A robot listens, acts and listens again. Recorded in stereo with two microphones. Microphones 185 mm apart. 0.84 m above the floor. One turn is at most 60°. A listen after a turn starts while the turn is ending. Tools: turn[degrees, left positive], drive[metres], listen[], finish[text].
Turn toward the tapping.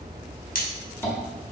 Action: turn[30]
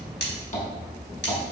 Thought: So it is at 135° left.
Action: turn[60]
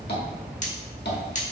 Thought: The tapping is now 80° left.
Action: turn[60]
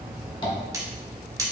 Thought: Nothing new. It was at 20° left.
Action: turn[20]
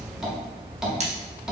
Action: finish[Found it: tapping, straight ahead.]